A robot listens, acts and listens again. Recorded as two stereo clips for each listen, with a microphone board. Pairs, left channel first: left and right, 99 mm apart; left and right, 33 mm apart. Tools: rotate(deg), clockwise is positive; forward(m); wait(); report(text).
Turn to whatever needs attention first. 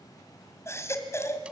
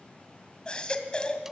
rotate(-25)
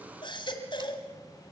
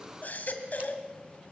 rotate(-125)
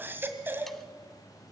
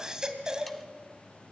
rotate(20)
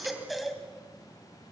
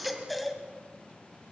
report("Facing the baby crying, 2 to 4 m away.")